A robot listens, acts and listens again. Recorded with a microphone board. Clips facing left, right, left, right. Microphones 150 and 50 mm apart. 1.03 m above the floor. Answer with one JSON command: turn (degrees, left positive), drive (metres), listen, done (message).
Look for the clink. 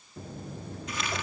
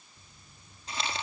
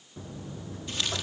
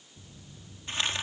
{"listen": true}
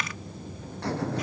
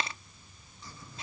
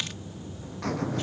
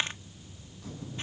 {"listen": true}
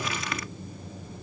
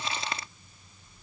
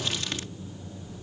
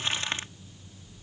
{"done": "I can't make out a clink to turn to."}